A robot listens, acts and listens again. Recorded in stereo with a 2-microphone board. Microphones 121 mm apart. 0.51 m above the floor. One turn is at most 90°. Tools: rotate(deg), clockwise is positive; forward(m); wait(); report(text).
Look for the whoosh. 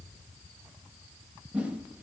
rotate(30)
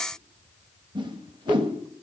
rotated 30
rotate(90)
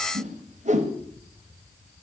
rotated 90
rotate(70)
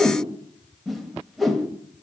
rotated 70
report("Found it: a whoosh, straight ahead.")